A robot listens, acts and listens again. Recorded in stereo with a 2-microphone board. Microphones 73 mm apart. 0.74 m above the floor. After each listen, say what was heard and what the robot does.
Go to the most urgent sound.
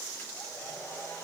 Keep listening.
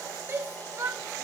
The shout: about 35° right or 145° right. Turn 35° right.
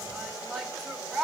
Drive 1.0 m forward.
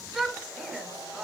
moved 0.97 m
Drive 1.0 m forward.
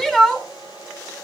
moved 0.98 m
The shout is now 10° left. Turn 10° left.
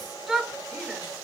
Drive 1.0 m forward.
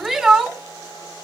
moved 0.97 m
Drive 1.0 m forward.
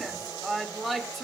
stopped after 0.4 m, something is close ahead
I am next to the shout.